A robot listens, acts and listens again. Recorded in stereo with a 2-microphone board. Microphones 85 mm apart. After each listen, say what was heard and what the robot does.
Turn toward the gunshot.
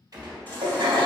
The gunshot: about 50° right or 130° right. Turn 50° right.
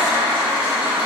Keep listening.
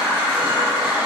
I heard a gunshot, but can't make it out now. It was about straight ahead or 80° right.